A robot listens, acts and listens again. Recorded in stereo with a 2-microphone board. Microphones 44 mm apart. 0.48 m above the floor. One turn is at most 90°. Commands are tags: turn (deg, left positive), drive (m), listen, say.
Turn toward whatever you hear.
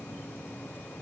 <listen/>
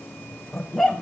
<turn deg="30"/>
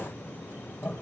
<turn deg="90"/>
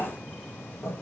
<turn deg="55"/>
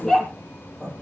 <turn deg="15"/>
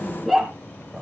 <say>Found it: a dog barking, straight ahead.</say>